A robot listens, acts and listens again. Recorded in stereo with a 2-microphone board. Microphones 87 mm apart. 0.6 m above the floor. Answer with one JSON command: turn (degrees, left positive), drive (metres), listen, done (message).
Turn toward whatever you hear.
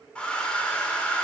{"turn": 30}
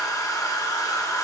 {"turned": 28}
{"turn": 140}
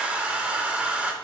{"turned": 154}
{"turn": -15}
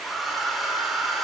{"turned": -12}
{"done": "Facing the hair dryer, under 1 m away."}